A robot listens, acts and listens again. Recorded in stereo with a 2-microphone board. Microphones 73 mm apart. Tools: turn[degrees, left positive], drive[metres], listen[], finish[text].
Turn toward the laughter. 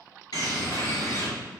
Action: listen[]
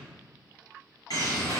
Action: listen[]
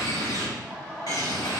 Thought: The laughter: about 20° left or 160° left.
Action: turn[20]
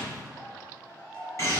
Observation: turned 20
Thought: The laughter: about 40° left or 140° left.
Action: turn[40]
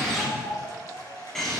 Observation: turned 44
Thought: So it is at 105° left.
Action: turn[105]
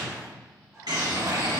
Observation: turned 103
Action: listen[]
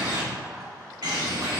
Action: finish[Facing the laughter, over 4 m away.]